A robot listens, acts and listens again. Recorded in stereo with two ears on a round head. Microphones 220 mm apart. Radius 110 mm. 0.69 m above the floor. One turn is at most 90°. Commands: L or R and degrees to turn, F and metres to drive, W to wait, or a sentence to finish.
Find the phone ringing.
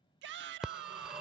R30
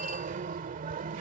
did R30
R90
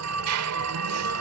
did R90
R70
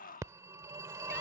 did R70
R15
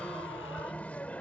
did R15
Found it: a phone ringing, straight ahead.